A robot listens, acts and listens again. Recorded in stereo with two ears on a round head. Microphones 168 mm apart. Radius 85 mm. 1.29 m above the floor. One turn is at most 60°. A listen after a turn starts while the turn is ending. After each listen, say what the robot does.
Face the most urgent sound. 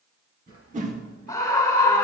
Turn 20° left.
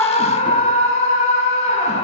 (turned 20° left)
Turn 60° left.
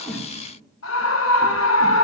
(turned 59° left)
Turn 60° left.
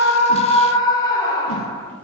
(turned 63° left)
Turn 20° left.
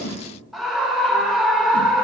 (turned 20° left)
Facing the scream.